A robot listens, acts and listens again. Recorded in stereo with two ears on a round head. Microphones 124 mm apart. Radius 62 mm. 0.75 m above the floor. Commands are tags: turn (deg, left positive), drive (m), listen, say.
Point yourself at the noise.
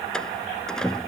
<turn deg="30"/>
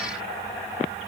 <listen/>
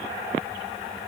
<say>I heard a door slam, but can't make it out now. It was about 25° right or 145° left.</say>